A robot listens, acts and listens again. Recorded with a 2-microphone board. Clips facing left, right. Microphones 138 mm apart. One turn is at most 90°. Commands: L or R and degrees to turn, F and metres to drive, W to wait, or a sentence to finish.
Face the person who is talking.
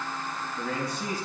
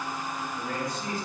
L90
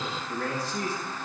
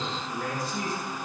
R15
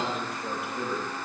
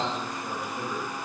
Facing the man speaking, over 4 m away.